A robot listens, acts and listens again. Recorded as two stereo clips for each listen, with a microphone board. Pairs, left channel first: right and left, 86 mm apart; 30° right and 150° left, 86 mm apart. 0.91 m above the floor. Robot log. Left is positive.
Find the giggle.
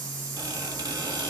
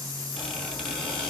cmd idle
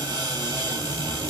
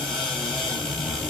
cmd idle
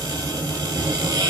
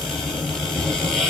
end: I can't make out a giggle to turn to.